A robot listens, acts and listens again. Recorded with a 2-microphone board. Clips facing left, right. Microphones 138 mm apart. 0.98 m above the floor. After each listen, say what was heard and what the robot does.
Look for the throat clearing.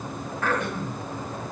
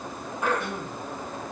The throat clearing: about 15° right or 165° right. Turn 15° right.
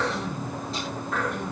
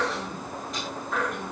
Found it: throat clearing, straight ahead.